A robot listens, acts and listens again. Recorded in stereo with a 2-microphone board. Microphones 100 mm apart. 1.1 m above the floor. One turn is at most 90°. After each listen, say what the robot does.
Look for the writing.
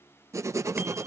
Turn 30° right.
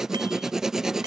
Found it: writing, straight ahead.